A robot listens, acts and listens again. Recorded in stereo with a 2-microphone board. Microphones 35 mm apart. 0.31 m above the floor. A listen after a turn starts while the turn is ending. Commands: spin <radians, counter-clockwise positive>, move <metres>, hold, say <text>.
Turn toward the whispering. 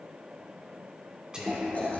spin -0.44
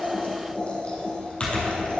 hold
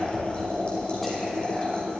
hold
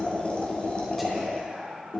say Facing the whispering, 2 to 4 m away.